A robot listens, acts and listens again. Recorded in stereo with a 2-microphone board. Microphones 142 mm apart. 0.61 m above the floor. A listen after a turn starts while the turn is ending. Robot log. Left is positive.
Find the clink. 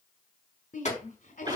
note: The clink: about 55° left or 125° left.
cmd yaw +55
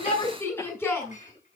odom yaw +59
note: So it is at 65° left.
cmd yaw +65
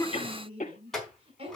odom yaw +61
end: Found it: a clink, straight ahead, over 4 m away.